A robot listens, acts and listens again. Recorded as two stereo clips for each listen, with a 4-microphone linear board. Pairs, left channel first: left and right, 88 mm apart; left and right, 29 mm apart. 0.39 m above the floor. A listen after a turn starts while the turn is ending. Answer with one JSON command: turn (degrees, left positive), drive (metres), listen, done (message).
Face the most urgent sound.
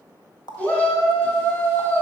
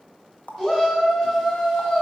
{"turn": 20}
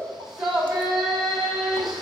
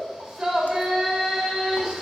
{"done": "Found it: a shout, straight ahead."}